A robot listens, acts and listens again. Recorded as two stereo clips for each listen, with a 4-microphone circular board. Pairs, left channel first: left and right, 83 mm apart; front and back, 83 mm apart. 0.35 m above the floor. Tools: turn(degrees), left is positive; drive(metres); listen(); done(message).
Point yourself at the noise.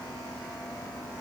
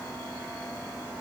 listen()
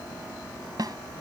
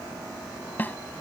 turn(degrees=-65)
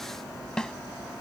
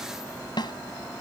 turn(degrees=10)
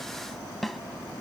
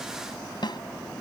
done("Facing the snare drum.")